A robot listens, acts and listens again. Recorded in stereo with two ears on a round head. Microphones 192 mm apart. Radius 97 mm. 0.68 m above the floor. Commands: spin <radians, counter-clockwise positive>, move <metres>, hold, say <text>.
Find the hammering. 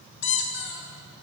hold
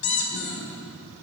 hold
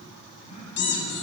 say I can't make out hammering to turn to.